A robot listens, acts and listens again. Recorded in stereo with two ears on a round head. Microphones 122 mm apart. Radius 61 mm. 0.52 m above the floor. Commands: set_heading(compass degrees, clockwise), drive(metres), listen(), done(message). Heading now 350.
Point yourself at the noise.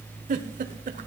set_heading(50)
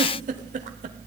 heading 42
set_heading(102)
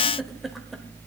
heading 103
listen()
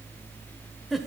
done("Facing the giggle, 1 to 2 m away.")